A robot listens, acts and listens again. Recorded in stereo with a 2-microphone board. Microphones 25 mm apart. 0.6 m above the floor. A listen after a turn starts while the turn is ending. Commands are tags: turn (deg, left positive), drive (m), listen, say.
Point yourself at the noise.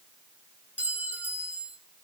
<turn deg="-90"/>
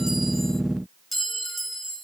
<say>Facing the clink, 2 to 4 m away.</say>